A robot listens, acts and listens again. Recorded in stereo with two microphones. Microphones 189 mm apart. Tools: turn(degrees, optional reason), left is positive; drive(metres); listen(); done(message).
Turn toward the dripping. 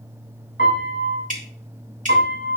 turn(degrees=-40, reason="The dripping: about 40° right or 140° right.")
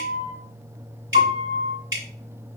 turn(degrees=-100, reason="So it is at 100° right.")
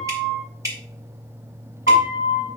turn(degrees=-15, reason="The dripping is now 15° right.")
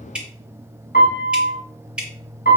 done("Facing the dripping.")